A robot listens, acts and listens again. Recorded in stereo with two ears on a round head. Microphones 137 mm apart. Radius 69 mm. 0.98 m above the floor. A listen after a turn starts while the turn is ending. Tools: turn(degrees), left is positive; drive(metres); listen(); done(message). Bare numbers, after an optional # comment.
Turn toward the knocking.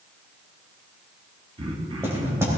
# The knocking: about 15° right or 165° right.
turn(-15)
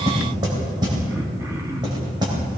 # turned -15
# So it is at 150° right.
turn(-150)
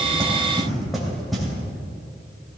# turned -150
done("Found it: knocking, straight ahead.")